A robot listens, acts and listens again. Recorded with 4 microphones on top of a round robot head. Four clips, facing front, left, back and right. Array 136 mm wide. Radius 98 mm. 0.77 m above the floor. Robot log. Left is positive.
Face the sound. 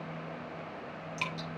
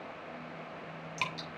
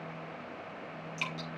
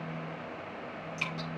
note: The dripping: 85° left.
cmd yaw +85
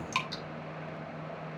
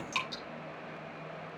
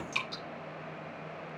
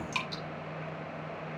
end: Facing the dripping.